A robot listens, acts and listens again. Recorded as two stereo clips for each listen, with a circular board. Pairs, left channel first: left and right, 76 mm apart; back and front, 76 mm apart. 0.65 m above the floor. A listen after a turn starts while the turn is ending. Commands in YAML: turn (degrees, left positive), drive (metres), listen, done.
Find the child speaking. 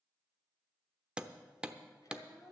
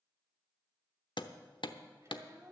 turn: 50
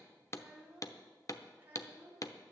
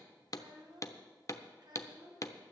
turn: -30
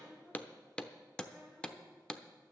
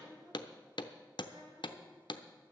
listen: true
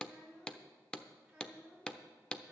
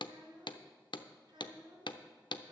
done: "Facing the child speaking."